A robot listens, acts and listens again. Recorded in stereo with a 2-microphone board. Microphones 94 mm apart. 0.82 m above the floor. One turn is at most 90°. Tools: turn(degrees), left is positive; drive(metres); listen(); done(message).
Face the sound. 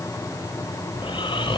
turn(degrees=65)
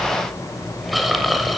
done("Found it: snoring, straight ahead.")